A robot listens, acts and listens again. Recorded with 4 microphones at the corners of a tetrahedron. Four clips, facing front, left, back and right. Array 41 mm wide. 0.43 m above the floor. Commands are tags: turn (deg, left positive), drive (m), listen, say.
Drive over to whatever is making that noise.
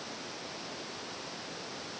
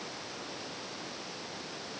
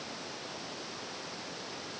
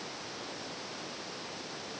<listen/>
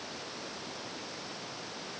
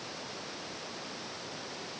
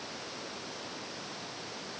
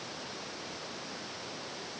<listen/>
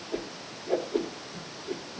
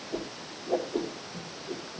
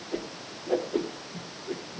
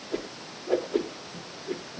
<turn deg="-120"/>
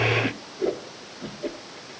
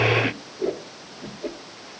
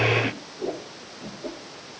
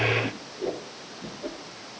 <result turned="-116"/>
<turn deg="-10"/>
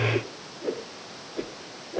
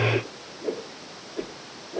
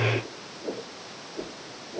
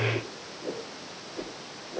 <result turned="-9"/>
<drive m="1.0"/>
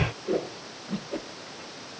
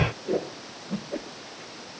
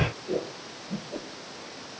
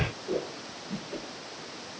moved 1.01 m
<drive m="1.0"/>
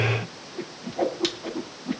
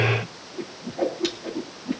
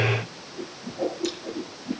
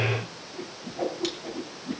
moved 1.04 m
<drive m="1.0"/>
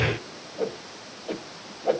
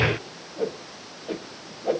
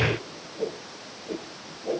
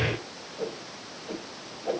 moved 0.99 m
<turn deg="15"/>
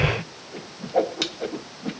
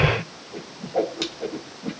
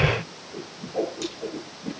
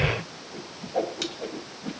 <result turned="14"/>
<drive m="1.0"/>
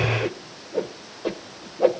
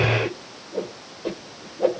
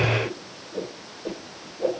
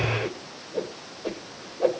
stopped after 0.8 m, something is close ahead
<say>I am next to the whoosh.</say>